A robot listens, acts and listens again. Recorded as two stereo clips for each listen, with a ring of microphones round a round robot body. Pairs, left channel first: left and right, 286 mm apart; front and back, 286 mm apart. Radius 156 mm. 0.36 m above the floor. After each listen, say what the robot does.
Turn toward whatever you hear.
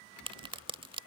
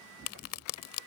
Turn 20° right.
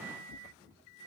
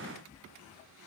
Facing where the crack came from. I can't hear it now.